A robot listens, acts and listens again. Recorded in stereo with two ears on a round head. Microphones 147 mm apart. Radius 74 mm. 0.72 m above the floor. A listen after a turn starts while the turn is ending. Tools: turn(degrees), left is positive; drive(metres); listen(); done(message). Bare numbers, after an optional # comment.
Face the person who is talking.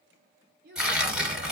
# The child speaking: about 60° right or 120° right.
turn(-60)
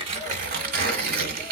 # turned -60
listen()
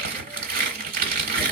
listen()
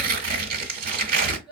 done("Found it: a child speaking, straight ahead, 2 to 4 m away.")